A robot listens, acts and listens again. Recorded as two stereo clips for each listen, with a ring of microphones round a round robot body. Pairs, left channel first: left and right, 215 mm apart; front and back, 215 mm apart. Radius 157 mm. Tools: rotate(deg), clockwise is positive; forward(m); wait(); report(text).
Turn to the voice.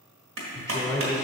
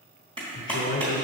rotate(-15)
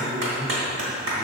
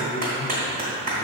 report("Found it: a man speaking, straight ahead, 1 to 2 m away.")